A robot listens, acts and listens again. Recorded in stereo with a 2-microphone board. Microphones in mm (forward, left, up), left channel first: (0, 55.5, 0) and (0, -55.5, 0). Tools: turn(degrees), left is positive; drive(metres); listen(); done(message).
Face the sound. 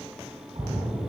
turn(degrees=-40)
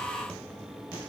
listen()
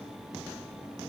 done("I heard a splash, but can't make it out now. It was about straight ahead or 100° right.")